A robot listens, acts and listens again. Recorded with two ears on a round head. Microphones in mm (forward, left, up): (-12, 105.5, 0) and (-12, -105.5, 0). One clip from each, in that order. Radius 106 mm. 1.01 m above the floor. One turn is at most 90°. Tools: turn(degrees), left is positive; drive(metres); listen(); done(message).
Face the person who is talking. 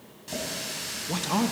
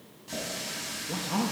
turn(degrees=55)
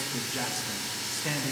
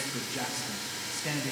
done("Facing the man speaking.")